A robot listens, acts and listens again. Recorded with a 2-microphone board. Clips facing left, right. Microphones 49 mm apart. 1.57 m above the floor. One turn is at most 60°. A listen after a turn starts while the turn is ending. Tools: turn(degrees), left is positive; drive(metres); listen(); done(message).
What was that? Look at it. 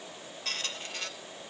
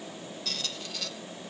turn(degrees=40)
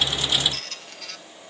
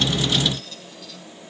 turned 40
turn(degrees=60)
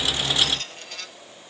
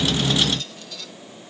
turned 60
turn(degrees=45)
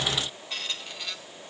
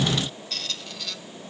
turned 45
turn(degrees=15)
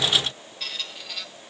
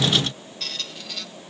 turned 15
done("Facing the squeak, 1 to 2 m away.")